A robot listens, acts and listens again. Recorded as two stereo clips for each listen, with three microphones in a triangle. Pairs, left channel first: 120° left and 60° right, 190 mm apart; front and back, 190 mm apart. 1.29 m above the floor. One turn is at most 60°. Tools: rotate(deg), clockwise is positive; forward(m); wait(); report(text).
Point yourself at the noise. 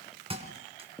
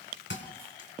report("Found it: a thud, straight ahead, 2 to 4 m away.")